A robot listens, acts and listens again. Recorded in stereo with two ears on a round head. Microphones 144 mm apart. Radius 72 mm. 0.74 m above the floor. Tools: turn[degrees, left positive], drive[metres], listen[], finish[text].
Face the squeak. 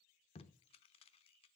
Action: listen[]
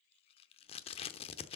Action: listen[]
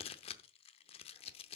Action: finish[I can't make out a squeak to turn to.]